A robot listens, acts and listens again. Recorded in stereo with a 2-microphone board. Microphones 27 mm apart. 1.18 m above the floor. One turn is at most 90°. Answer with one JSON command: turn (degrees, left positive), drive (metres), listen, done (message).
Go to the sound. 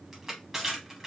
{"turn": -30}
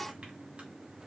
{"listen": true}
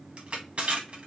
{"turn": -90}
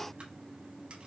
{"turn": -50}
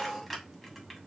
{"drive": 1.0}
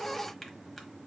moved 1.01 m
{"listen": true}
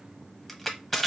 {"drive": 1.0}
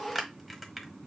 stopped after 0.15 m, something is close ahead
{"done": "Arrived at the crushing, straight ahead."}